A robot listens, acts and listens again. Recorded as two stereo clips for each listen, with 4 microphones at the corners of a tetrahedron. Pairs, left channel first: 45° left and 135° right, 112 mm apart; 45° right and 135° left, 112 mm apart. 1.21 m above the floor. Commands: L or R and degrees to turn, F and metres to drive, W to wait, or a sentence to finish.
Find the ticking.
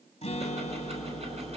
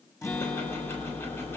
R115
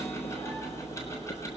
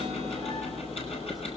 R20
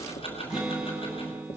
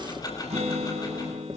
L10
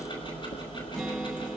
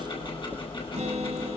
Found it: ticking, straight ahead.